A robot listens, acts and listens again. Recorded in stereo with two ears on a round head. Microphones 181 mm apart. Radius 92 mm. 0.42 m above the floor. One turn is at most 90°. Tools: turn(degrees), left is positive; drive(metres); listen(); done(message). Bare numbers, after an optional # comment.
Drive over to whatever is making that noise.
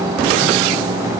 listen()
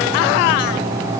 listen()
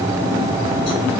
done("I can't make out anything to turn to.")